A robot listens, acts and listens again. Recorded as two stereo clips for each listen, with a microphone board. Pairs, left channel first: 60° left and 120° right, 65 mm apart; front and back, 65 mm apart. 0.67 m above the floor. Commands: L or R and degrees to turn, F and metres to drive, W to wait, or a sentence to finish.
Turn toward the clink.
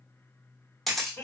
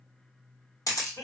W
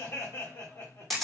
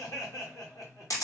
W
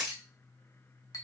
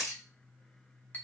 L60
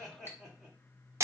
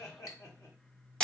W
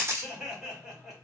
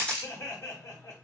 W
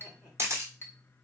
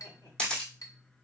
L10
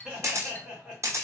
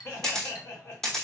Found it: a clink, straight ahead.